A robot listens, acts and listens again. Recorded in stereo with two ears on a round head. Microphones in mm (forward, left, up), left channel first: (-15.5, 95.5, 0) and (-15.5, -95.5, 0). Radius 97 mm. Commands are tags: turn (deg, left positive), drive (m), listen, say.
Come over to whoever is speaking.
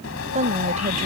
<turn deg="-35"/>
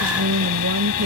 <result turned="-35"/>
<turn deg="-110"/>
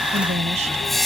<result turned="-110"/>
<turn deg="-35"/>
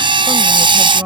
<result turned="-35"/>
<turn deg="-10"/>
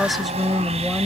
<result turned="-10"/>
<drive m="1.0"/>
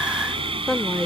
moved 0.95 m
<drive m="1.0"/>
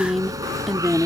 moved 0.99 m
<drive m="1.0"/>
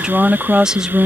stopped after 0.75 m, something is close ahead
<say>I am next to the woman speaking.</say>